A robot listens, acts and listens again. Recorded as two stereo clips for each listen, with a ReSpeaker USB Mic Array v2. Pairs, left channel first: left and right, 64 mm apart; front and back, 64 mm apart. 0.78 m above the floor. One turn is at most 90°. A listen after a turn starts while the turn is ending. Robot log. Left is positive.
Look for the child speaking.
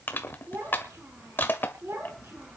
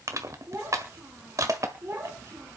note: The child speaking: 130° right.
cmd yaw -90
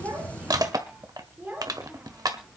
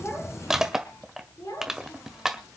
note: The child speaking is now 20° right.
cmd yaw -20
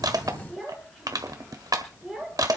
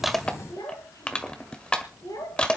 end: Facing the child speaking.